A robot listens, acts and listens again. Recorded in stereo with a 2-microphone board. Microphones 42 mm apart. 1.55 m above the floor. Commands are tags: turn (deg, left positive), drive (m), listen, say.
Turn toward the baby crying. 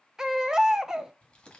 <turn deg="-15"/>
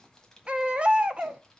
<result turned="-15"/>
<turn deg="-150"/>
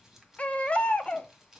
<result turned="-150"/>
<turn deg="35"/>
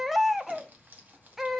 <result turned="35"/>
<say>Found it: a baby crying, straight ahead, under 1 m away.</say>